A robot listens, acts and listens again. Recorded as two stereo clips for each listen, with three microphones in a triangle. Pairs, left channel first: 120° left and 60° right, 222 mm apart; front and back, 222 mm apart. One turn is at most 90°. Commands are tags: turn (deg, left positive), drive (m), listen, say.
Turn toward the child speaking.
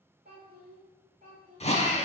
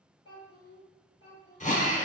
<say>Facing the child speaking, 1 to 2 m away.</say>